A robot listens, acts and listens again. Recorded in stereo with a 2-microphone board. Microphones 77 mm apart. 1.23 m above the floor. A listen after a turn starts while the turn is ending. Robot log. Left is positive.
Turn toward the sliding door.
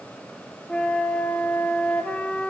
cmd idle
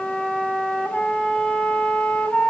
cmd idle
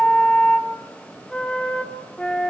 end: I can't make out a sliding door to turn to.